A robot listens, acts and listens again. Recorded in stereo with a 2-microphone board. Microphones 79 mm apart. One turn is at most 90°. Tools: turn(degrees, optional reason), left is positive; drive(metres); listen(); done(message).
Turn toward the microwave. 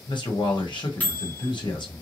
turn(degrees=20, reason="The microwave: about 20° left or 160° left.")
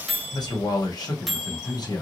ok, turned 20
done("Facing the microwave.")